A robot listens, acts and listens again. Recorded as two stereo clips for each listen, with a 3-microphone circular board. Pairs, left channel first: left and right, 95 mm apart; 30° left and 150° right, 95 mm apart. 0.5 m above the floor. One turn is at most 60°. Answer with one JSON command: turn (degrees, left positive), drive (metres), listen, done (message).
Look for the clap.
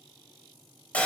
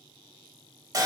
{"listen": true}
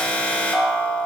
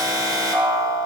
{"listen": true}
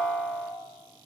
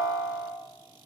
{"done": "I can't make out a clap, only an alarm."}